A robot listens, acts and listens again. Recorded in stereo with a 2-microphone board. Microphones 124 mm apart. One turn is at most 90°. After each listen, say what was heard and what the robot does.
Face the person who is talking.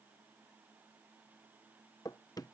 Keep listening.
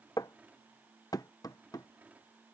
Keep listening.
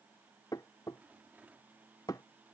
I can't make out anyone speaking, only a rattle and knocking.